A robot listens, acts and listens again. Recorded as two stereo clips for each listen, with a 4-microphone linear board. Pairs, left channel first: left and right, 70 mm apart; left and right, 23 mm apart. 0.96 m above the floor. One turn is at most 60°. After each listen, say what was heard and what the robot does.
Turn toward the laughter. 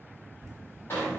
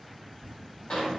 The laughter: about 60° right or 120° right. Turn 60° right.
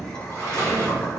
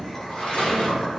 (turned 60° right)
Keep listening.
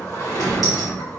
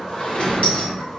So it is at 50° left. Turn 50° left.
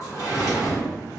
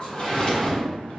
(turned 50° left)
Keep listening.
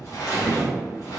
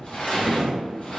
Keep listening.
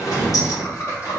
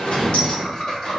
The laughter is now 40° left. Turn 40° left.
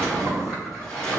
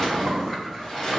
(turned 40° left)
Keep listening.
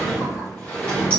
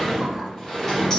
Keep listening.
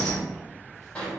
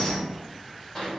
I heard laughter from this way, but can't make it out now.